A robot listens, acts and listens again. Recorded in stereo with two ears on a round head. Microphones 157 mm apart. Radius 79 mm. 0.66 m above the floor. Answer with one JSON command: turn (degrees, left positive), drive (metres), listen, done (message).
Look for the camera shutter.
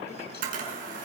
{"turn": -50}
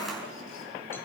{"done": "Found it: a camera shutter, straight ahead."}